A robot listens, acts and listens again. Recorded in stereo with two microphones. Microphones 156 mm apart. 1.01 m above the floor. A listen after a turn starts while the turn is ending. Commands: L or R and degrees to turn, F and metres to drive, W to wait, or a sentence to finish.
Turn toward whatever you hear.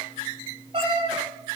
R40
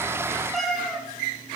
Facing the cat meowing, 2 to 4 m away.